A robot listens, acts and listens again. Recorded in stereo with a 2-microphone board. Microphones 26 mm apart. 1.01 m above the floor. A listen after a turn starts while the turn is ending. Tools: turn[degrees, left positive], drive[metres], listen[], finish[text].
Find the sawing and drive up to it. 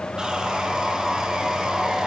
Thought: The sawing: about 25° right or 155° right.
Action: turn[-25]
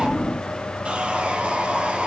Thought: So it is at 125° right.
Action: turn[-125]
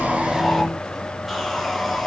Action: drive[1.0]
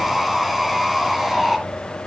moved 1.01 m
Thought: The sawing is now 10° right.
Action: turn[-10]
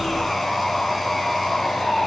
Action: drive[1.0]
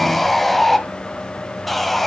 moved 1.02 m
Action: drive[1.0]
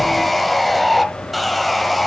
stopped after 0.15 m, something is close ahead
Action: finish[Arrived at the sawing, straight ahead.]